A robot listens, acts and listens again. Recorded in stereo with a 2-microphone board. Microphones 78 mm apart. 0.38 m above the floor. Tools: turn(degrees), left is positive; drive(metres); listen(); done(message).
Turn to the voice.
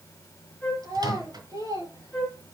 turn(degrees=-55)
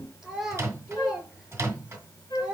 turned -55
turn(degrees=-15)
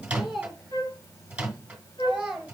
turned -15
turn(degrees=-10)
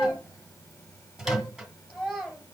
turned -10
done("Facing the child speaking, 2 to 4 m away.")